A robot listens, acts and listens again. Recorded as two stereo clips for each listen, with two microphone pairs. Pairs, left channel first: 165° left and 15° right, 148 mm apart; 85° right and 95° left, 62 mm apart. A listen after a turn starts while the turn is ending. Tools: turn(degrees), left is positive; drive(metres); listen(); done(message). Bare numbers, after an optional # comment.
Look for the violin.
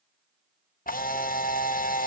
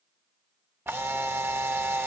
listen()
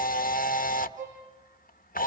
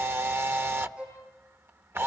# The violin: 20° left.
turn(20)
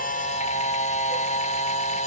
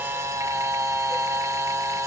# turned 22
listen()
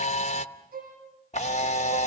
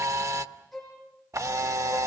done("Facing the violin, over 4 m away.")